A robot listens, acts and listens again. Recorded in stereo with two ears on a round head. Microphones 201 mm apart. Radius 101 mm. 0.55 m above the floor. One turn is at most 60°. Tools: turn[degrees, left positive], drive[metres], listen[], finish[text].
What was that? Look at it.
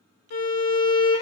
Thought: The violin: about 70° left or 110° left.
Action: turn[60]
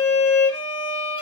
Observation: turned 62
Thought: So it is at 30° left.
Action: turn[30]
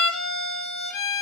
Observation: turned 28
Action: finish[Found it: a violin, straight ahead, under 1 m away.]